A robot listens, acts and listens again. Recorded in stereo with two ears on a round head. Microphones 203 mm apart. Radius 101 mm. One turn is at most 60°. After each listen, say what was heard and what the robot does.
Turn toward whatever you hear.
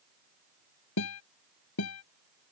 Turn 60° left.
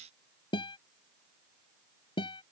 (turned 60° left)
So it is at 25° left. Turn 25° left.
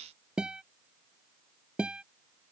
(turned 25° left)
Facing the guitar.